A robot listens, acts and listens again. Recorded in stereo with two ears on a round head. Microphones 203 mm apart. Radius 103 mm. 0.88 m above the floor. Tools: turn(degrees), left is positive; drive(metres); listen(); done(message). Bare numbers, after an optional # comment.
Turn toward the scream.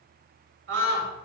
# The scream: about 60° right or 120° right.
turn(-60)
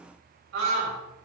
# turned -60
# So it is at 60° right.
turn(-60)
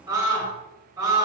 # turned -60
# The scream is now 15° right.
turn(-15)
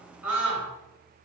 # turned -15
done("Facing the scream.")